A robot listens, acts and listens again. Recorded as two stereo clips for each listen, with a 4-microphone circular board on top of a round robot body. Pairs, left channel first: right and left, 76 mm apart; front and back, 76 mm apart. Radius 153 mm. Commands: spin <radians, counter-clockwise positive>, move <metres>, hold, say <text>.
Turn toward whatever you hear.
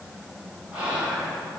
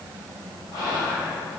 spin 0.35
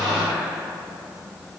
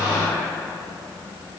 say Facing the whispering.